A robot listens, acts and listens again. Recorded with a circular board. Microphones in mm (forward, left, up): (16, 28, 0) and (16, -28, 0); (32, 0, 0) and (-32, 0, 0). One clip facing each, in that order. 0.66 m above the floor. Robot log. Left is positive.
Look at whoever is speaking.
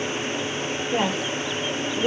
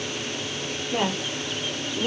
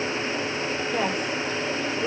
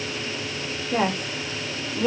note: The woman speaking: 155° left.
cmd yaw +155
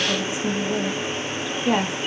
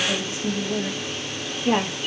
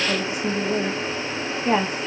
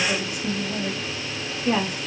end: Found it: a woman speaking, straight ahead.